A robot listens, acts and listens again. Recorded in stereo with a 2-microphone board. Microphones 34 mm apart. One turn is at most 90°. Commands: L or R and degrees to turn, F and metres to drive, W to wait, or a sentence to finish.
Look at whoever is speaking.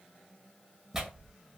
W
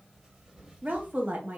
R55
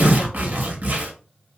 W
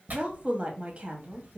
R50
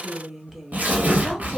Found it: a woman speaking, straight ahead.